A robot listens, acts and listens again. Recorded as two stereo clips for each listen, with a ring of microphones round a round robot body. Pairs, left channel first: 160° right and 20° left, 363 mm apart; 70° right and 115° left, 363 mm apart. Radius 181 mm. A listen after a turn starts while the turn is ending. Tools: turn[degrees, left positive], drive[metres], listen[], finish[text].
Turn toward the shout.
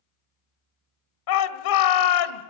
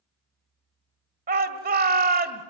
Thought: The shout: 175° left.
Action: turn[175]
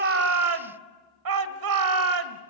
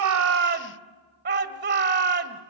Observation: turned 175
Thought: The shout is now 50° left.
Action: turn[50]
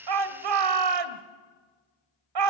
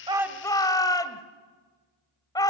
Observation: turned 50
Thought: The shout is now 10° left.
Action: turn[10]
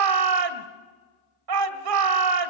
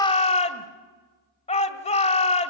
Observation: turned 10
Action: finish[Found it: a shout, straight ahead, 1 to 2 m away.]